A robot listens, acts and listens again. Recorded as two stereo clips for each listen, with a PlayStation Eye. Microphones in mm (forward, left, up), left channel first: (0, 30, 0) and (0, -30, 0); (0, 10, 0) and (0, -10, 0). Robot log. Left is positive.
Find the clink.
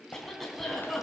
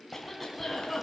cmd idle
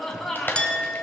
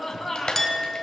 note: The clink: about 20° left or 160° left.
cmd yaw +20
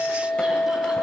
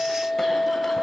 note: So it is at 140° left.
cmd yaw +140
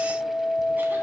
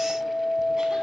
note: The clink is now 10° left.
cmd yaw +10
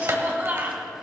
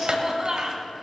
cmd idle
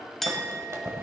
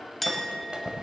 end: Found it: a clink, straight ahead, 1 to 2 m away.